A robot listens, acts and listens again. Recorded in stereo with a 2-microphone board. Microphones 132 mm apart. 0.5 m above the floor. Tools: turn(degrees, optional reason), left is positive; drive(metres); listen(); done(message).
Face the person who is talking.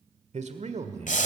turn(degrees=-60, reason="The man speaking: about 60° right or 120° right.")
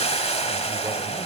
listen()
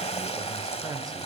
listen()
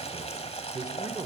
turn(degrees=-35, reason="So it is at 35° right.")
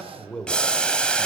turn(degrees=10, reason="The man speaking is now 10° left.")
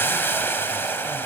listen()
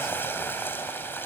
listen()
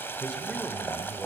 done("Facing where the man speaking came from. I can't hear it now.")